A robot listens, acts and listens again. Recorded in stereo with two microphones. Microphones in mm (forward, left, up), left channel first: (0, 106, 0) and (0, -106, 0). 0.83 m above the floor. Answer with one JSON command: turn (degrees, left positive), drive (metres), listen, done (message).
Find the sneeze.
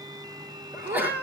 {"turn": -30}
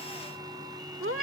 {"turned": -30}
{"listen": true}
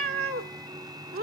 {"done": "I heard a sneeze, but can't make it out now. It was about 20° left or 140° right."}